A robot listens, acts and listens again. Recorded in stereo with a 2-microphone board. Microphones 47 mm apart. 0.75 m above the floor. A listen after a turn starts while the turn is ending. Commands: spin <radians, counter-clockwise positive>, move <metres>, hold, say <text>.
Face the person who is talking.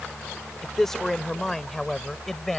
spin 0.52
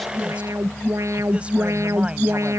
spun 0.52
hold
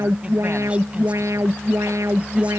hold
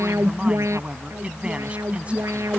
say I heard a man speaking, but can't make it out now. It was about 25° right or 145° left.